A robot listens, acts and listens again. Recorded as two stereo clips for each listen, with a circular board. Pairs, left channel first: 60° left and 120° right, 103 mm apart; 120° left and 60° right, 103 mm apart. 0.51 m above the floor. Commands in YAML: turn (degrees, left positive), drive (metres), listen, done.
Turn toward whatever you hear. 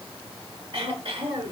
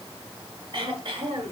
turn: -100
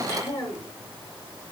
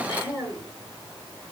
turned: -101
done: "Facing the throat clearing, over 4 m away."